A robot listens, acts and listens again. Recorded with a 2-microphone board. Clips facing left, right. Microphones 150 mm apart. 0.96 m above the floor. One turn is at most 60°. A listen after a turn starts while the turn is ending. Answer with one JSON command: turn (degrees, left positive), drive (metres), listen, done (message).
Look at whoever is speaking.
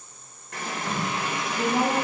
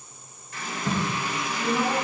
{"turn": 40}
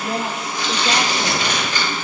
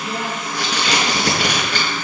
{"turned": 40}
{"listen": true}
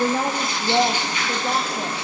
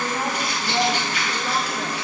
{"turn": 45}
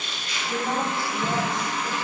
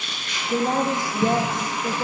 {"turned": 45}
{"turn": -50}
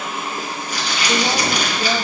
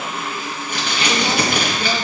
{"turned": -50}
{"listen": true}
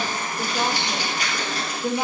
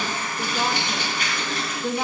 {"turn": 15}
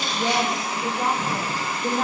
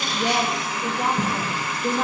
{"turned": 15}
{"done": "Found it: a woman speaking, straight ahead."}